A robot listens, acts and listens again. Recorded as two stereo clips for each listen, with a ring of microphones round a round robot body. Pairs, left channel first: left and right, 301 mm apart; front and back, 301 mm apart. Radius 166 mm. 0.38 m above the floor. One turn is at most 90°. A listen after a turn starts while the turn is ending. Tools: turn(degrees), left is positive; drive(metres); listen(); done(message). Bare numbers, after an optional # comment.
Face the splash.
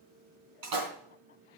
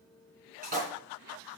# The splash: 115° right.
turn(-90)
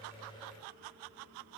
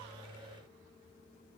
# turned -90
# Nothing new. It was at 25° right.
turn(-25)
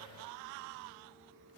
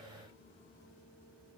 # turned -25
done("I heard a splash from this way, but can't make it out now.")